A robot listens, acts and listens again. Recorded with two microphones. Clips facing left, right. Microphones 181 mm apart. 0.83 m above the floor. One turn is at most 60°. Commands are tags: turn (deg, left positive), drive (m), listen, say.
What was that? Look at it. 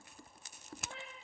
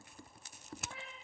<turn deg="20"/>
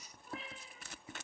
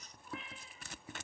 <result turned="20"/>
<turn deg="35"/>
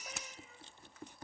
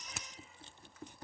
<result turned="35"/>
<listen/>
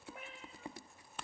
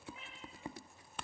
<turn deg="60"/>
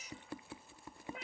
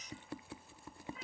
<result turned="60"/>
<turn deg="60"/>
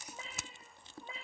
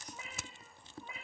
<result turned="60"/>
<turn deg="30"/>
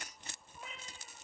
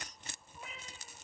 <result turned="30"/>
<say>Facing the cat meowing, 2 to 4 m away.</say>